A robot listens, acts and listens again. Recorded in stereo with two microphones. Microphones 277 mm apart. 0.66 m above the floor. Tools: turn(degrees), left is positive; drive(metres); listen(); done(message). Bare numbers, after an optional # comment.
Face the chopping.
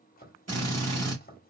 # The chopping: about 30° left or 150° left.
turn(30)
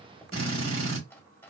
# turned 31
# So it is at 10° left.
turn(10)
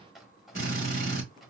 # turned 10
done("Found it: chopping, straight ahead.")